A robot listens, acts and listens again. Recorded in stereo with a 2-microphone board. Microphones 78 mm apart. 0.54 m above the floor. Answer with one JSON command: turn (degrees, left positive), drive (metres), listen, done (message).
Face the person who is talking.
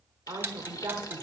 {"turn": -45}
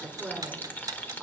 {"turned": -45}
{"turn": -10}
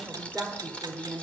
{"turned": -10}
{"done": "Facing the woman speaking, 1 to 2 m away."}